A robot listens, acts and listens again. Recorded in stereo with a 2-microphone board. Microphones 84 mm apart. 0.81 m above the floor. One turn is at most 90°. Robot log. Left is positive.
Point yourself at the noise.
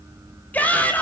note: The shout: about 15° left or 165° left.
cmd yaw +15
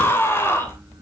note: So it is at 150° left.
cmd yaw +90
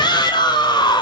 note: The shout is now 65° left.
cmd yaw +65
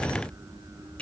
note: The shout is now 15° left.
cmd yaw +15
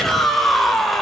end: Found it: a shout, straight ahead, 2 to 4 m away.